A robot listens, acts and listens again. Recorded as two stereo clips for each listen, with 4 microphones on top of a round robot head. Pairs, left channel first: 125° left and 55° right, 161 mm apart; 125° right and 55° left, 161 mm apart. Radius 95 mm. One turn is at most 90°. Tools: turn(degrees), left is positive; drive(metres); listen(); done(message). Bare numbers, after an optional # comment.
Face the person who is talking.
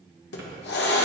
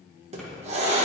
listen()
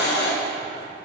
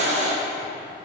listen()
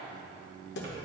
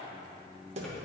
done("I can't make out anyone speaking to turn to.")